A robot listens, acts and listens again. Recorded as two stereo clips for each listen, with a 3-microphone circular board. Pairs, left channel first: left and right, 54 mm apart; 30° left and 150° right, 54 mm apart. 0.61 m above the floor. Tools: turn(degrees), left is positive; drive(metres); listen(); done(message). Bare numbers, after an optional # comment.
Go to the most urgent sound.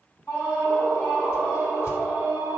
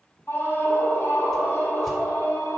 # The scream: 75° left.
turn(75)
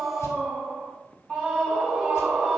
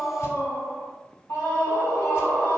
# The scream is now 15° left.
turn(15)
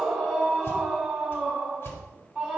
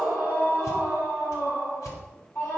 drive(1.0)
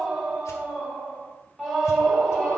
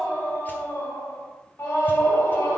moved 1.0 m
drive(1.0)
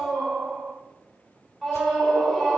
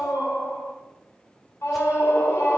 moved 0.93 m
drive(1.0)
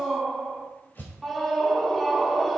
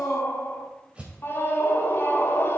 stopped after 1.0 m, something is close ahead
done("I am next to the scream.")